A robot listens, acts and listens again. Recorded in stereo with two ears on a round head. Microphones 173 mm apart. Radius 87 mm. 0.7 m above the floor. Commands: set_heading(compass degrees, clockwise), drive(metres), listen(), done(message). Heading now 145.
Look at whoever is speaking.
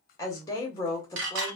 set_heading(130)
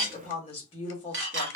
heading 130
set_heading(335)
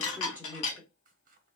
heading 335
set_heading(345)
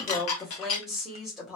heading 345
done("Found it: a woman speaking, straight ahead, under 1 m away.")